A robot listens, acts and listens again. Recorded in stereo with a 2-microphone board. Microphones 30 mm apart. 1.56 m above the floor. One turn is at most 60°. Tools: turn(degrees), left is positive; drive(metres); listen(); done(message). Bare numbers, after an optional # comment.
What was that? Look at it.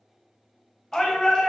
# The shout: about 20° left or 160° left.
turn(20)
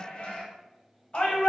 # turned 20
# So it is at 140° left.
turn(60)
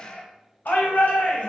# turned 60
# The shout is now 85° left.
turn(60)
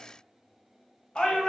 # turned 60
# The shout is now 30° left.
turn(30)
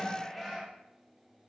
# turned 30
done("Facing the shout.")